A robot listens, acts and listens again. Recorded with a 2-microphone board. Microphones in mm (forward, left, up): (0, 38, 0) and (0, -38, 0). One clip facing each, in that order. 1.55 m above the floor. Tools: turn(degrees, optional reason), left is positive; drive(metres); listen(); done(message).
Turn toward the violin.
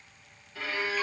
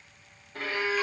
turn(degrees=-50, reason="The violin: about 50° right or 130° right.")
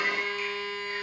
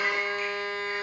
turn(degrees=-80, reason="So it is at 80° right.")
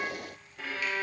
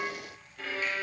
turn(degrees=10, reason="The violin is now 10° left.")
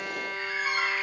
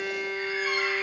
done("Found it: a violin, straight ahead.")